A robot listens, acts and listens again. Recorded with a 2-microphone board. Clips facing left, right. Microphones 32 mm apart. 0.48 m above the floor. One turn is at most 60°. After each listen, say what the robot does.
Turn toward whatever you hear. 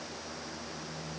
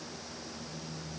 Keep listening.
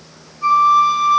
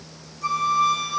Turn 30° left.
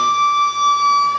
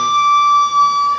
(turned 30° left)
Found it: a flute, straight ahead.